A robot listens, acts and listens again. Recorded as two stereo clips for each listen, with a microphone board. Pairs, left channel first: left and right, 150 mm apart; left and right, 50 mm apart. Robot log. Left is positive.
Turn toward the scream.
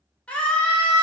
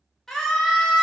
cmd yaw +30
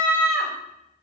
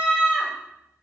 note: So it is at 20° right.
cmd yaw -20
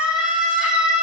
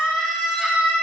end: Found it: a scream, straight ahead.